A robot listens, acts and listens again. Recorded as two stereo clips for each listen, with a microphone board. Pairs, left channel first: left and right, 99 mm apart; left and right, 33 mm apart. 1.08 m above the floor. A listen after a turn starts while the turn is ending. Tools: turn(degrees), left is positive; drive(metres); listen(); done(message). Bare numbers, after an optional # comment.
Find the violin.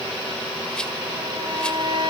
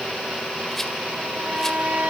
# The violin: about 50° right or 130° right.
turn(-50)
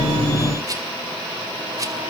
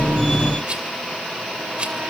listen()
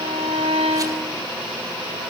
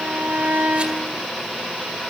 # So it is at 85° right.
turn(-85)
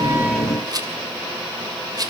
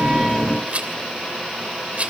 listen()
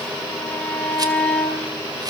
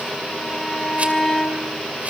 # The violin is now 15° left.
turn(15)
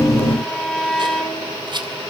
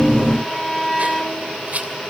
done("Found it: a violin, straight ahead.")